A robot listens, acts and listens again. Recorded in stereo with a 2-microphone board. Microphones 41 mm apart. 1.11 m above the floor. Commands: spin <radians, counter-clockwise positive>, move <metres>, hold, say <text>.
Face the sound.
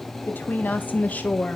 spin 0.61
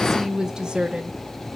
spin -0.52
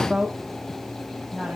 spin -0.61
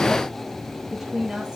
spin -0.35
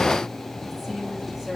spin -0.17
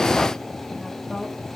hold
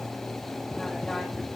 hold
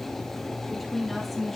say Found it: a woman speaking, straight ahead, 2 to 4 m away.